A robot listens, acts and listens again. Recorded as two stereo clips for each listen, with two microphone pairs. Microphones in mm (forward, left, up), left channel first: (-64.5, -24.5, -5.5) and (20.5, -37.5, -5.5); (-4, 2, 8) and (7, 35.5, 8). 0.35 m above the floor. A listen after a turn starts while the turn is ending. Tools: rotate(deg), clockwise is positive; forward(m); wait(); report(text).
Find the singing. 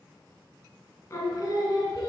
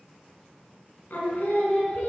rotate(145)
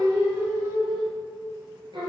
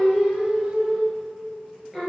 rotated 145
rotate(10)
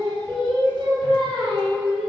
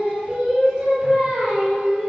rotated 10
report("Found it: singing, straight ahead, over 4 m away.")